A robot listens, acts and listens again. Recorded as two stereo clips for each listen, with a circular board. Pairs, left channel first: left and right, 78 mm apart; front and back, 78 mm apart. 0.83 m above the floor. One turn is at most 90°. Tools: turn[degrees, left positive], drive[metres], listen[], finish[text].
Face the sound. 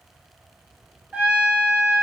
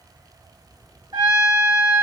Thought: The trumpet: 165° right.
Action: turn[-90]
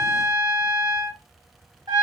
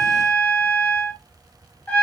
Thought: The trumpet is now 70° right.
Action: turn[-70]
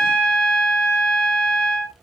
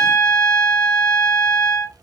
Thought: The trumpet is now 10° left.
Action: turn[10]
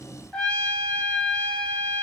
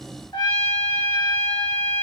Action: finish[Found it: a trumpet, straight ahead.]